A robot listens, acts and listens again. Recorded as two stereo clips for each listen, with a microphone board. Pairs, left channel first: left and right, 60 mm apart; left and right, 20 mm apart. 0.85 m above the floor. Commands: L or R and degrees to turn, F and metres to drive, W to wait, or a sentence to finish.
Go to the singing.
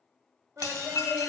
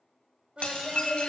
R50
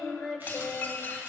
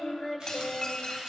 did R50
F1.0
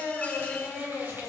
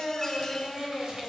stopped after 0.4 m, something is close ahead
Something is in my way. I am facing the singing but have not reached it.